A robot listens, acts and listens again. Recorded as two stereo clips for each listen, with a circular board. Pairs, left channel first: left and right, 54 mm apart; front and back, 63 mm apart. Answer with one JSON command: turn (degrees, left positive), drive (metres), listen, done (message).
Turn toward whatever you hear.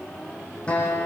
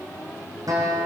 {"turn": 160}
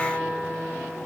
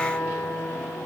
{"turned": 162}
{"done": "Facing the guitar, over 4 m away."}